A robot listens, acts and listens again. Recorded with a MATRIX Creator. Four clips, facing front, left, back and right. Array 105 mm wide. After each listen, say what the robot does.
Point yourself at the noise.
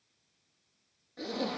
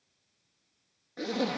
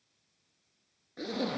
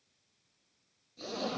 Turn 110° left.
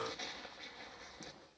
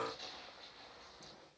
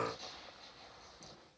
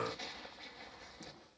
Turn 20° right.
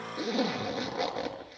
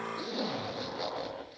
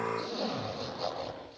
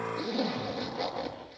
Found it: a zipper, straight ahead, over 4 m away.